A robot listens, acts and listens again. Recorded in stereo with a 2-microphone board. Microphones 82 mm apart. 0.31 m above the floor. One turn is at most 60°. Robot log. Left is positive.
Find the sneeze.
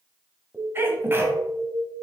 note: The sneeze: about 30° right or 150° right.
cmd yaw -30
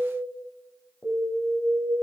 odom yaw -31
cmd idle
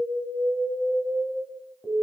end: I heard a sneeze, but can't make it out now. It was about 5° left or 120° right.